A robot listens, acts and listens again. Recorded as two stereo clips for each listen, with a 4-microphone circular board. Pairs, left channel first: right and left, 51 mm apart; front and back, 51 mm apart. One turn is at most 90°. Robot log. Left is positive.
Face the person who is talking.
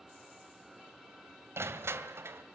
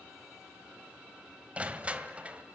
cmd idle
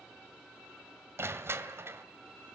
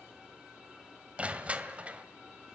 cmd idle
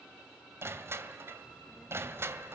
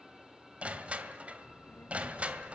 end: Facing the child speaking.